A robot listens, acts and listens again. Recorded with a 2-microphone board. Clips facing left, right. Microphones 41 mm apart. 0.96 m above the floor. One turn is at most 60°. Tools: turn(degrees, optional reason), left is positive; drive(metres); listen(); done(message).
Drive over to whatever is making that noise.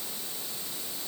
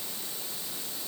listen()
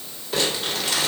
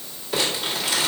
turn(degrees=-30)
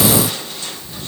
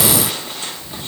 listen()
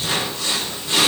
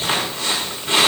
turn(degrees=-60, reason="So it is at 145° right.")
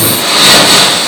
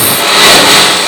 turn(degrees=-60, reason="The crumpling is now 85° right.")
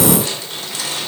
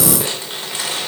turn(degrees=-25, reason="Nothing new. It was at 25° right.")
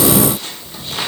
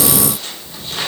drive(metres=1.0)
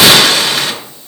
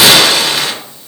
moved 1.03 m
drive(metres=1.0)
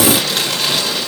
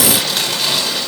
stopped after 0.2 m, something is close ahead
done("Arrived at the crumpling, straight ahead.")